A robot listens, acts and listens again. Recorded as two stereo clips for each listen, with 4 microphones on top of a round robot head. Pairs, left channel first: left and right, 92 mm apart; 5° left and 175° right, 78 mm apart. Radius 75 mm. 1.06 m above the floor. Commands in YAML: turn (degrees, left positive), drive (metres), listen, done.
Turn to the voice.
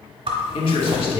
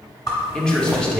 turn: 80
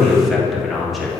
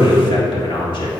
done: "Facing the man speaking, 1 to 2 m away."